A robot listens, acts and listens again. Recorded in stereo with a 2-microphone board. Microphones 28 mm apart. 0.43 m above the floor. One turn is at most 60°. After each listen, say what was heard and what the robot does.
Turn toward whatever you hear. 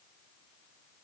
Keep listening.
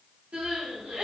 The crying: about 55° right or 125° right. Turn 55° right.
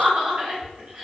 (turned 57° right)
So it is at 65° right. Turn 60° right.
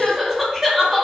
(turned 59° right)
Facing the crying, under 1 m away.